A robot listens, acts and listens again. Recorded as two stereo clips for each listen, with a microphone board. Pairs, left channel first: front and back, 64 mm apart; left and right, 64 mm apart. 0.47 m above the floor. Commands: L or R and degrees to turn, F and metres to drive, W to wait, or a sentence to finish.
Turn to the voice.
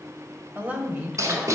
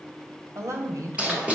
R115
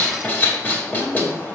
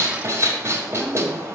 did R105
R10
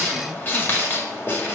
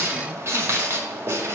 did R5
W
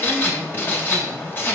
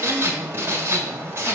L20
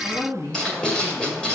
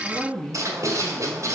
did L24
Facing the woman speaking.